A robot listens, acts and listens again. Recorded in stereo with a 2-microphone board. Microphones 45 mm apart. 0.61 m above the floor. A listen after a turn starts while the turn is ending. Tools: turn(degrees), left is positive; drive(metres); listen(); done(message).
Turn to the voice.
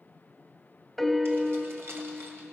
listen()
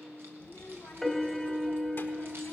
turn(degrees=55)
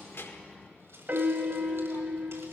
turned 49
listen()
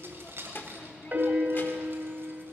turn(degrees=60)
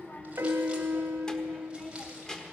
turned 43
turn(degrees=20)
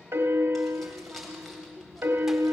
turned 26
done("Facing the child speaking, 1 to 2 m away.")